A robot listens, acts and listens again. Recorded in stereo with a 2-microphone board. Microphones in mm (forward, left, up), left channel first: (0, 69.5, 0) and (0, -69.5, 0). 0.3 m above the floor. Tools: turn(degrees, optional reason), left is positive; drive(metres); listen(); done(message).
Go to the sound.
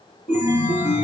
turn(degrees=90)
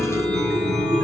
drive(metres=1.0)
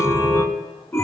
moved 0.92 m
turn(degrees=20, reason="The chime is now 20° left.")
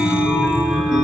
drive(metres=1.0)
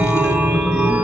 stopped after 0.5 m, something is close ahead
turn(degrees=-10, reason="The chime is now 10° right.")
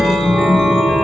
done("Arrived at the chime, straight ahead.")